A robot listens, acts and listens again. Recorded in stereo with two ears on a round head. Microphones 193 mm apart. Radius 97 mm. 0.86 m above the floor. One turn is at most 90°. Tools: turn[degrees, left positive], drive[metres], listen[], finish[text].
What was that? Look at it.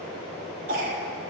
Thought: The cough: about 40° right or 140° right.
Action: turn[-40]
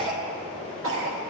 Thought: So it is at 95° right.
Action: turn[-90]
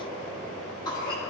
Thought: The cough is now 20° left.
Action: turn[20]
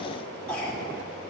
Action: finish[Found it: a cough, straight ahead, 1 to 2 m away.]